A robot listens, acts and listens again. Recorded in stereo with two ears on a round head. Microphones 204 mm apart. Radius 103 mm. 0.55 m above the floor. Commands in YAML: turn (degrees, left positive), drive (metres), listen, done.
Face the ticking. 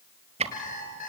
turn: -30
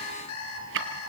turn: -120
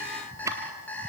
turn: -15
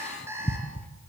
done: "Found it: ticking, straight ahead."